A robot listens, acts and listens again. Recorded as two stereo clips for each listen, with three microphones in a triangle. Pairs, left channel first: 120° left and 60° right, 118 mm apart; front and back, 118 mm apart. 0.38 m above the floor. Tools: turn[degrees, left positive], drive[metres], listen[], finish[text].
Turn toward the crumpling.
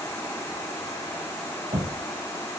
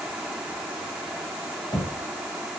Action: listen[]
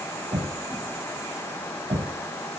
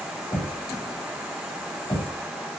Action: listen[]
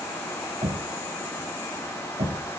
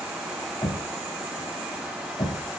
Action: finish[I can't make out crumpling to turn to.]